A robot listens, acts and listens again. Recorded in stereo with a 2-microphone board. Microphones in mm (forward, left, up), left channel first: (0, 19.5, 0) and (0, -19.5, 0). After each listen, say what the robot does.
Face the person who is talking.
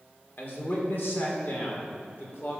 Turn 65° left.
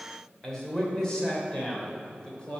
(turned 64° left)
Turn 20° left.
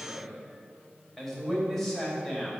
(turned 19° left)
Found it: a man speaking, straight ahead, 2 to 4 m away.